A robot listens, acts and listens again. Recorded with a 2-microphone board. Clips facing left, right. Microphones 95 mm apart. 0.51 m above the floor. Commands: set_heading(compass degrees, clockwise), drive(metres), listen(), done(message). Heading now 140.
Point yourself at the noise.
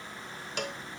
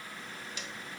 set_heading(75)
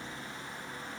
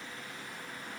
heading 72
listen()
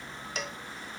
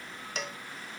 done("Facing the cowbell.")